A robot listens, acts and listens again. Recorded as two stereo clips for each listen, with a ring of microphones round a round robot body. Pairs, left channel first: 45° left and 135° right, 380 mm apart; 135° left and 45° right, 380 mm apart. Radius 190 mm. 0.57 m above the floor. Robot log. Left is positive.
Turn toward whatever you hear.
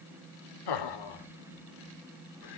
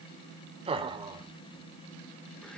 note: The laughter: 35° left.
cmd yaw +35
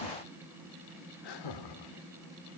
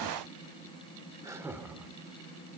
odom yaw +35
note: The laughter is now 40° left.
cmd yaw +40
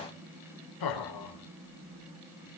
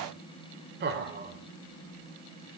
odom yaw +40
note: The laughter is now 20° left.
cmd yaw +20
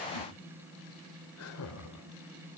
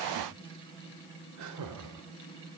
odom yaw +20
end: Facing the laughter, 2 to 4 m away.